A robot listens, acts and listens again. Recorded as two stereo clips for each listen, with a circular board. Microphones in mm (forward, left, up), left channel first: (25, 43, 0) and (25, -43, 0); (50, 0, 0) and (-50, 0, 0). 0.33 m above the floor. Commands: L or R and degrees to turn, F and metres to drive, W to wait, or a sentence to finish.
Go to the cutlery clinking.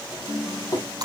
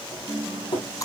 L40
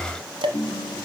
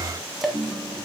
W
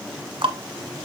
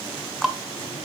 F1.0
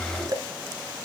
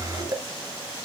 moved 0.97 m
W
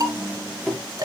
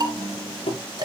F1.0
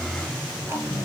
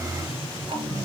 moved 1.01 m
F1.0
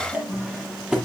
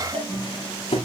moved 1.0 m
R10
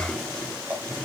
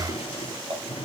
F1.0
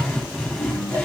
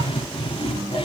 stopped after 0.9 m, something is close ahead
Arrived at the cutlery clinking, straight ahead.